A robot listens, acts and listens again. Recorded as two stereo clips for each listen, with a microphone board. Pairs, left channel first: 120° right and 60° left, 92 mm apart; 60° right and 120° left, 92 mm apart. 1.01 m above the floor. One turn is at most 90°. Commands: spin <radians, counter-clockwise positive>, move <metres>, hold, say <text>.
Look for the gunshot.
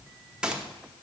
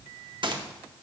spin 1.57
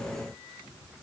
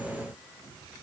spin 0.87
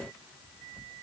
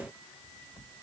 say I heard a gunshot from this way, but can't make it out now.